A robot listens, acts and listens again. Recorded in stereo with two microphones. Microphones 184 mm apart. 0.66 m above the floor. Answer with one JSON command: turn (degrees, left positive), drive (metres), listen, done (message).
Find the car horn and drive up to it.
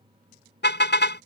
{"turn": 90}
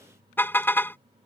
{"turn": 10}
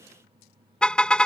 {"drive": 1.0}
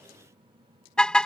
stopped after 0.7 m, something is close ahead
{"done": "Something is in my way. I am facing the car horn but have not reached it."}